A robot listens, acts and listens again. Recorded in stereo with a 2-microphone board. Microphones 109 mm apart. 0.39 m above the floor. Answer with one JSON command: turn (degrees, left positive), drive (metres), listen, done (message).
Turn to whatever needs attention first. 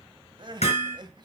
{"turn": -45}
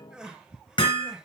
{"turn": -10}
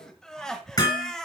{"done": "Facing the crying, 1 to 2 m away."}